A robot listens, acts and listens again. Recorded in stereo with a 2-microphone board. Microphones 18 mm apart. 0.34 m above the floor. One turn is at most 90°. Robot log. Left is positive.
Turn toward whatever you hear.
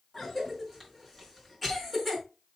cmd yaw +30
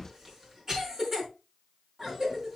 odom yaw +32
note: So it is at 30° right.
cmd yaw -30
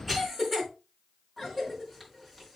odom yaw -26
end: Facing the cough, over 4 m away.